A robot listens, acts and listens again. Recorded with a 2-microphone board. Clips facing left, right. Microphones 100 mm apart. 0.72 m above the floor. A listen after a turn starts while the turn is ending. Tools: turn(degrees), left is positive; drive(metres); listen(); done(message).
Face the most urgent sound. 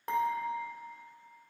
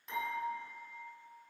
listen()
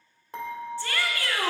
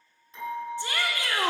turn(degrees=-20)
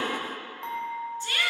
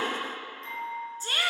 turn(degrees=-140)
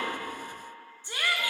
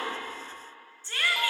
turn(degrees=15)
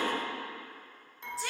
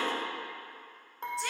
done("Facing the shout.")